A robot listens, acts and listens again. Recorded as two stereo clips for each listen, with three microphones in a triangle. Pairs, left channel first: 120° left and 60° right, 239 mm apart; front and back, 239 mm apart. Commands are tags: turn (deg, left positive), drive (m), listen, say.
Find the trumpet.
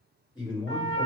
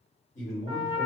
<turn deg="115"/>
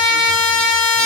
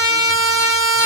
<say>Found it: a trumpet, straight ahead.</say>